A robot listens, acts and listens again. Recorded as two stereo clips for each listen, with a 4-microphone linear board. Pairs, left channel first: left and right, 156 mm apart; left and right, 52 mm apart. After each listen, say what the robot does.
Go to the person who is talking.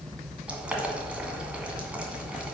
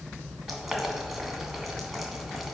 Keep listening.
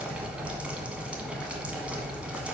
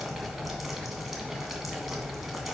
Keep listening.
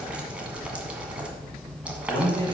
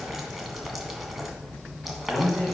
Turn 30° left.
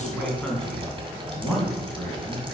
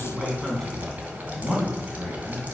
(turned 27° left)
Drive 1.0 m forward.
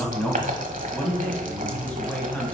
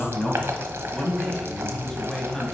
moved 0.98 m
Turn 10° left.
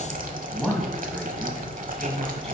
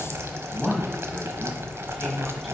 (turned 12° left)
Drive 1.0 m forward.
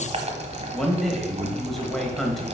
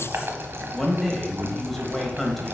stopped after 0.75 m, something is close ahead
Arrived at the man speaking, straight ahead.